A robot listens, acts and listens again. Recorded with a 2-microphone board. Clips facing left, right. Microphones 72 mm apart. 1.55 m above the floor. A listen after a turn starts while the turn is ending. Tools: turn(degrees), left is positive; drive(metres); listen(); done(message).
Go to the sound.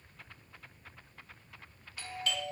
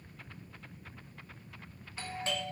turn(degrees=-30)
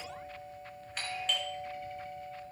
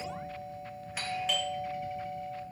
drive(metres=1.0)
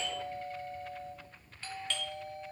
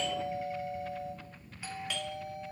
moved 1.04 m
turn(degrees=-10)
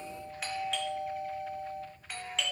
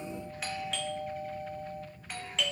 drive(metres=1.0)
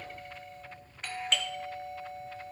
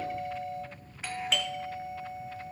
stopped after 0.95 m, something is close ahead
done("I am next to the doorbell.")